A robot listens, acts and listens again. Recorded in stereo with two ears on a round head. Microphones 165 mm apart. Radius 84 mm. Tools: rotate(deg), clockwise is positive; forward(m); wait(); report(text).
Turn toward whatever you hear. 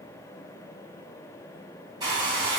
rotate(20)
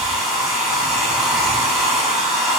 report("Facing the hair dryer.")